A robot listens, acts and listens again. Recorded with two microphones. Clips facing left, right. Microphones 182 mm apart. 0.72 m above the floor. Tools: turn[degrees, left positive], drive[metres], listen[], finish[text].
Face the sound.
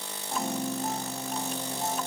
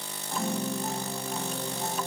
Thought: The piano: about 20° left or 160° left.
Action: turn[20]
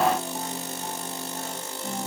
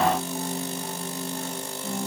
Thought: So it is at 135° left.
Action: turn[135]
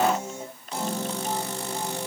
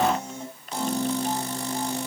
Action: finish[Found it: a piano, straight ahead, 2 to 4 m away.]